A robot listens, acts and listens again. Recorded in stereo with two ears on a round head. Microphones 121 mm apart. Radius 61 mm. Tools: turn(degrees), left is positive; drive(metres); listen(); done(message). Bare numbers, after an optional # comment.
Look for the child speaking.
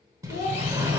# The child speaking: about 65° left or 115° left.
turn(65)
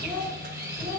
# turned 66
# So it is at 15° left.
turn(15)
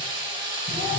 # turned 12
listen()
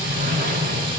listen()
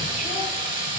done("Facing where the child speaking came from. I can't hear it now.")